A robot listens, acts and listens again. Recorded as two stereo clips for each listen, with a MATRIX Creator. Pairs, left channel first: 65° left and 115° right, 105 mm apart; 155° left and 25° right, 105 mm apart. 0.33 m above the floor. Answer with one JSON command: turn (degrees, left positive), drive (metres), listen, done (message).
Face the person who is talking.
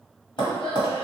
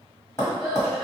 {"turn": 65}
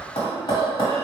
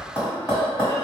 {"turn": 20}
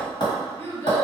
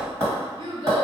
{"done": "Found it: a child speaking, straight ahead."}